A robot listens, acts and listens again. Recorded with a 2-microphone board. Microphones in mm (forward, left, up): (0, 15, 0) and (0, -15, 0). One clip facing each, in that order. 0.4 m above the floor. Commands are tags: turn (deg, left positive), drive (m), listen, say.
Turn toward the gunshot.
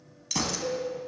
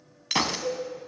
<turn deg="-50"/>
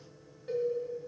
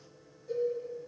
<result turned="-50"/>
<listen/>
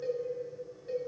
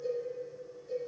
<say>I heard a gunshot, but can't make it out now. It was about straight ahead or 80° right.</say>